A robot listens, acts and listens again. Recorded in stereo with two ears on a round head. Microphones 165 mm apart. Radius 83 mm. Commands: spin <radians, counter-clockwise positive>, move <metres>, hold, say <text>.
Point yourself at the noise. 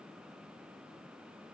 hold
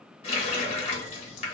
spin 0.61
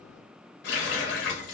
spin 1.83
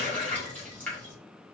spin 0.17
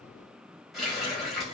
say Found it: a running tap, straight ahead.